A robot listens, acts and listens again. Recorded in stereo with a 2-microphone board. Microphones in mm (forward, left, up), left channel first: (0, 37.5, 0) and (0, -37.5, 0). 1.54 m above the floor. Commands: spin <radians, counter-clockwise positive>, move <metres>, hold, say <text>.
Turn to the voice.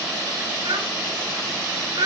spin -1.31
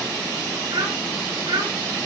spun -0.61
spin -1.22
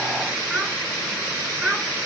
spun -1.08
say Found it: a child speaking, straight ahead.